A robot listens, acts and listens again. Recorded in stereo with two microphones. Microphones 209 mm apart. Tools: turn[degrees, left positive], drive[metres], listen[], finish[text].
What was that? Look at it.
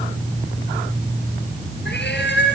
Thought: The cat meowing: about 55° left or 125° left.
Action: turn[55]
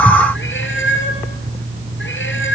Thought: So it is at 65° left.
Action: turn[65]
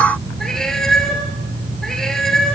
Action: finish[Found it: a cat meowing, straight ahead, 2 to 4 m away.]